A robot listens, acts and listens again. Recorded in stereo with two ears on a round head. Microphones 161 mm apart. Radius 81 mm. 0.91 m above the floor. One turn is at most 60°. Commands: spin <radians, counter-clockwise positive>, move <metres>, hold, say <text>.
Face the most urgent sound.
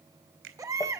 spin -0.35
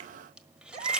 spin -1.05
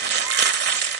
spin -1.05
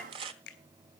spin -0.35
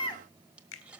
spin 0.44
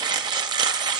hold
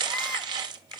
hold
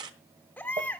spin 0.17
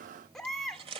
say Facing the baby crying.